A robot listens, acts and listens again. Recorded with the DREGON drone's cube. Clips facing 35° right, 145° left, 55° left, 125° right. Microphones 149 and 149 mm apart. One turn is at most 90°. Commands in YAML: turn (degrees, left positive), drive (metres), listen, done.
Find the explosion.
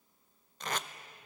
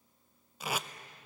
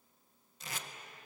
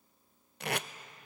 listen: true
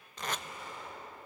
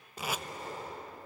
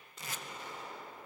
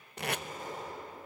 turn: -90
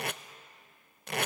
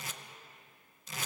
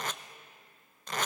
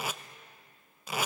turn: -75
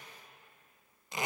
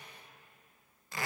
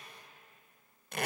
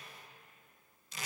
done: "Facing where the explosion came from. I can't hear it now."